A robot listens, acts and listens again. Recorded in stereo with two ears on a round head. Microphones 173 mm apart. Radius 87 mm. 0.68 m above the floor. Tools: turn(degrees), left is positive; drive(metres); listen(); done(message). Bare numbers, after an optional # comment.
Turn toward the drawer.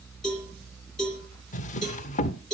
# The drawer: about 40° left or 140° left.
turn(40)
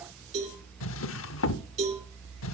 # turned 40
# So it is at 100° left.
turn(100)
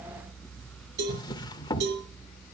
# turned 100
# The drawer is now 20° left.
turn(20)
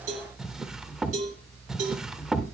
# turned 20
done("Facing the drawer, under 1 m away.")